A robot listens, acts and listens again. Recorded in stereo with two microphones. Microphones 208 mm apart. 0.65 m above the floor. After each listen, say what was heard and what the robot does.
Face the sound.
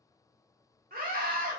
The scream: about 45° right or 135° right. Turn 45° right.
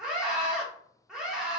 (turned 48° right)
Facing the scream, 1 to 2 m away.